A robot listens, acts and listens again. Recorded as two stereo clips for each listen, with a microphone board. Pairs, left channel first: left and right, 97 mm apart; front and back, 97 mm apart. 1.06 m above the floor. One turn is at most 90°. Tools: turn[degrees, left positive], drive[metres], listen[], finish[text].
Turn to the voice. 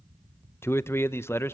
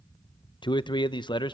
Thought: The man speaking: 30° left.
Action: turn[30]
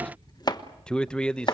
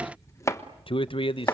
Thought: The man speaking is now 10° left.
Action: turn[10]
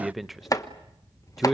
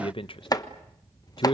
Action: finish[Found it: a man speaking, straight ahead.]